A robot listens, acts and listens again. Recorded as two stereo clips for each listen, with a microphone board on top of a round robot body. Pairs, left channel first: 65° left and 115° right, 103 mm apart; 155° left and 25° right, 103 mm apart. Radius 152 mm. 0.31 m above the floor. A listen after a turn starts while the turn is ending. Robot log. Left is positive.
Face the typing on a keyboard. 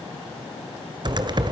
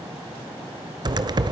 note: The typing on a keyboard: 70° right.
cmd yaw -70
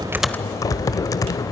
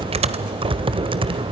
note: The typing on a keyboard is now 10° left.
cmd yaw +10
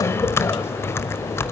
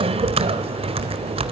end: Facing the typing on a keyboard.